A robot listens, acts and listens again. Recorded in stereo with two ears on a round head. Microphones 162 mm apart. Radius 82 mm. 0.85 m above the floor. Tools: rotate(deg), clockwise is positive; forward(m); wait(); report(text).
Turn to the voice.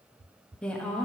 rotate(-30)
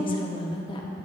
rotate(-145)
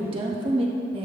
rotate(35)
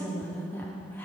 rotate(-15)
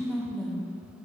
report("Found it: a woman speaking, straight ahead.")